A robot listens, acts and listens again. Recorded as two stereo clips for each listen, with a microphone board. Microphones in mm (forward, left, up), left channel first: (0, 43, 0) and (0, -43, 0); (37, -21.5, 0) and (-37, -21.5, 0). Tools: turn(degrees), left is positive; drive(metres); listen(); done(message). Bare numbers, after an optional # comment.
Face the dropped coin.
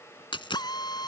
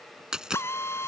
# The dropped coin: 100° left.
turn(100)
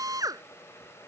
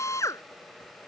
done("I heard a dropped coin from this way, but can't make it out now.")